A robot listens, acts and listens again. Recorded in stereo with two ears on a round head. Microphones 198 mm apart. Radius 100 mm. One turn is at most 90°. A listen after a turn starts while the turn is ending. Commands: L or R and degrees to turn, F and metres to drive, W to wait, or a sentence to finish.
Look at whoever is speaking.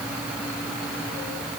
W
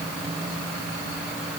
W
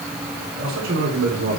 R60
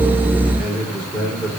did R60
Found it: a man speaking, straight ahead.